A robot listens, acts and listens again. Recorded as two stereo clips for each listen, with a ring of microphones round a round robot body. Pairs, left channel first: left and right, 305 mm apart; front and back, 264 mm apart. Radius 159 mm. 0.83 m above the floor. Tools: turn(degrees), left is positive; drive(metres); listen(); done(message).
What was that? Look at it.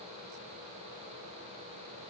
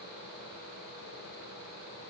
listen()
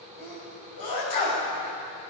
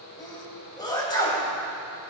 turn(degrees=75)
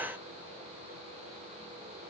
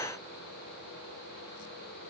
done("Facing where the sneeze came from. I can't hear it now.")